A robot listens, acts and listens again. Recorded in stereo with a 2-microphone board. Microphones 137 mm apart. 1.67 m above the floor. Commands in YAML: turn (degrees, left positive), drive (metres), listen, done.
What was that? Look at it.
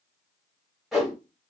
turn: -30
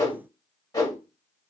turn: 25
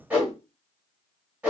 turn: -15
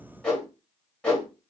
done: "Facing the whoosh, 1 to 2 m away."